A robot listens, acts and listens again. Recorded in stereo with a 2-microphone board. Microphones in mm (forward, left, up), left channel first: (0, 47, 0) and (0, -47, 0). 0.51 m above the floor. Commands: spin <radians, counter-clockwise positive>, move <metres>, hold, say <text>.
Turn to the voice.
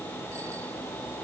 hold
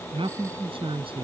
spin -1.22
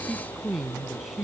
say Found it: a man speaking, straight ahead.